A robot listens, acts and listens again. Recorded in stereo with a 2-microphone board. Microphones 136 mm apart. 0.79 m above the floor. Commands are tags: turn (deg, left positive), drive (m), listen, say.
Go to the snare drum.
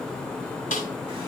<turn deg="90"/>
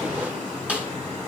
<turn deg="-10"/>
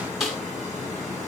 <drive m="1.0"/>
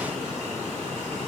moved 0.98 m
<listen/>
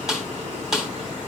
<drive m="1.0"/>
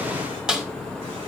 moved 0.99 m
<drive m="1.0"/>
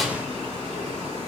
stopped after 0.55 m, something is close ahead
<listen/>
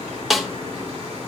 <say>I am next to the snare drum.</say>